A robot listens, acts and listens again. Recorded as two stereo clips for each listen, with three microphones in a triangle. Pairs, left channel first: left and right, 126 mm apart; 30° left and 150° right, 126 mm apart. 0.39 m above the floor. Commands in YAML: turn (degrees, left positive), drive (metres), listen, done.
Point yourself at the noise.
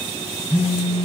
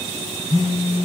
turn: 75
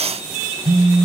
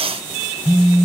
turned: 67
done: "Facing the phone buzzing, 1 to 2 m away."